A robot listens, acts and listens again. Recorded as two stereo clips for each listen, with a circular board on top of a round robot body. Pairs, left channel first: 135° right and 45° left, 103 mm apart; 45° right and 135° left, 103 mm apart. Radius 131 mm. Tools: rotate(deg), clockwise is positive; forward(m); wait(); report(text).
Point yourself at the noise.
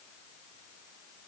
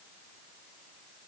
wait()
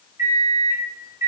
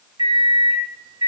rotate(-100)
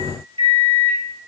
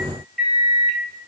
rotate(-40)
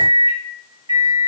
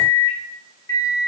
report("Facing the microwave.")